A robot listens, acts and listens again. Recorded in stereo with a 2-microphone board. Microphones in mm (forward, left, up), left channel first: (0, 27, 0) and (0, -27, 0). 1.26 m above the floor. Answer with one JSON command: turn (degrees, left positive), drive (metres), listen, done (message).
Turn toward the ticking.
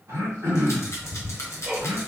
{"turn": -30}
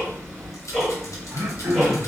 {"turn": 15}
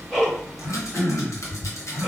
{"done": "Facing the ticking, 1 to 2 m away."}